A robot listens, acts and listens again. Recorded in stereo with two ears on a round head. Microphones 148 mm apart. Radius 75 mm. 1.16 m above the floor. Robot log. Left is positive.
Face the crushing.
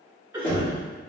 cmd idle
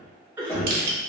note: The crushing: about 60° right or 120° right.
cmd yaw -60
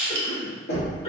note: So it is at 60° right.
cmd yaw -60
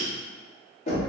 cmd idle
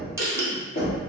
note: The crushing is now 20° right.
cmd yaw -20
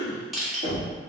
end: Facing the crushing.